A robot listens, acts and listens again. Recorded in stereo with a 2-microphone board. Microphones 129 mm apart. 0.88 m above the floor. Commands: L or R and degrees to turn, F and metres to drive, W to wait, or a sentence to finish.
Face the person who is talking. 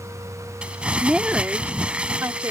R25
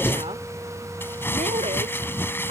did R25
W
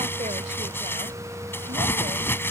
W
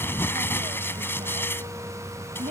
R105
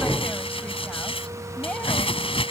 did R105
W
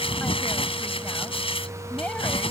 W
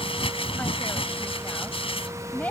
L10
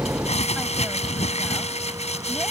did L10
W
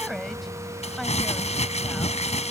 W
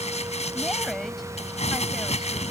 I heard a woman speaking from this way, but can't make it out now.